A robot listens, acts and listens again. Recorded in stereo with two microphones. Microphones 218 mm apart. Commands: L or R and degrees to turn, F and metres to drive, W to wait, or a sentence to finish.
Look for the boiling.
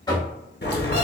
L50
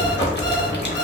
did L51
L65
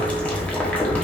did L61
Facing the boiling, under 1 m away.